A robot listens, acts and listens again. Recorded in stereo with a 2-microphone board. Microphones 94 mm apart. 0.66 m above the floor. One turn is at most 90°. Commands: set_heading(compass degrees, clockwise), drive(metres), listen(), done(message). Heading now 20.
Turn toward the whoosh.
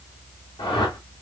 set_heading(320)
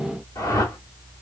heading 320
set_heading(275)
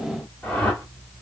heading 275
set_heading(260)
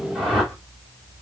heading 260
done("Found it: a whoosh, straight ahead, 1 to 2 m away.")